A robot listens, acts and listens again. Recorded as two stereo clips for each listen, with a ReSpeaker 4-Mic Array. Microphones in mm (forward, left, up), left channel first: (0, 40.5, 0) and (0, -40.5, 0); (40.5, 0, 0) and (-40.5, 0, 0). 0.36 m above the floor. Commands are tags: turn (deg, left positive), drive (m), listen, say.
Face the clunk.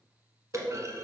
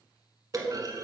<turn deg="-140"/>
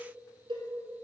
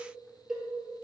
<say>Facing where the clunk came from. I can't hear it now.</say>